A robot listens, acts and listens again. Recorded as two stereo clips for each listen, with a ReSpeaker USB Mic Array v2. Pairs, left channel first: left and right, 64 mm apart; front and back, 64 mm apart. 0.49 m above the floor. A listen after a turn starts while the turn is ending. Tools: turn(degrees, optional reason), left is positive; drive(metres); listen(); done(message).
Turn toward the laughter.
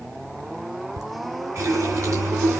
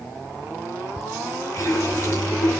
turn(degrees=-90, reason="The laughter: 90° right.")
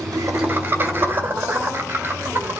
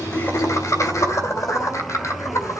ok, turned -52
turn(degrees=-35, reason="The laughter is now 35° right.")
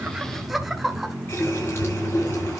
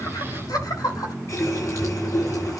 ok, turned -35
done("Facing the laughter, 2 to 4 m away.")